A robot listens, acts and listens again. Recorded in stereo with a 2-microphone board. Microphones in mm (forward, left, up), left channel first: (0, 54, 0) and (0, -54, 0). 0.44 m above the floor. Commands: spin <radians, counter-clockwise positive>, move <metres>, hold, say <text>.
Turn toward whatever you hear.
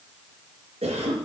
spin -1.05
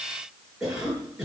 say Facing the cough, over 4 m away.